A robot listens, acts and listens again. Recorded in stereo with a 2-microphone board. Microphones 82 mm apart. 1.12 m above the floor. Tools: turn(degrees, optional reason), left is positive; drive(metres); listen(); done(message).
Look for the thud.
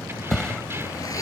turn(degrees=30)
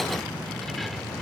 listen()
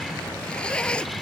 done("I heard a thud, but can't make it out now. It was about 25° right or 145° left.")